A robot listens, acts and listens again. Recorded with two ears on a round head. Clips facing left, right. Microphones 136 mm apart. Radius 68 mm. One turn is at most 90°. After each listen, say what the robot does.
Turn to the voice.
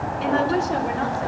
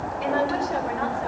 Turn 30° left.
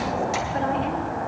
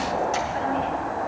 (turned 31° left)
Keep listening.
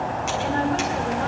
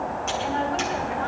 Turn 90° left.
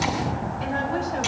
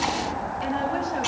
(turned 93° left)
Turn 50° left.
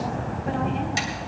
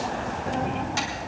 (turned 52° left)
Keep listening.
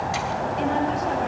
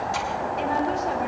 Found it: a woman speaking, straight ahead, over 4 m away.